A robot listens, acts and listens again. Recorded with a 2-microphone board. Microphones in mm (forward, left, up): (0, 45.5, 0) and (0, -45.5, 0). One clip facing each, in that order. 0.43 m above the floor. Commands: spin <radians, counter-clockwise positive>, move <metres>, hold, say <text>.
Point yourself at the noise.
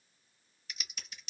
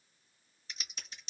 spin -0.52
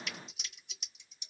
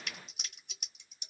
spin -2.01
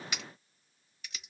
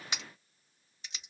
spin -0.52
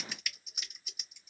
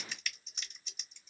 spin 0.17
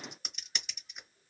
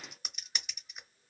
say Found it: typing on a keyboard, straight ahead, 1 to 2 m away.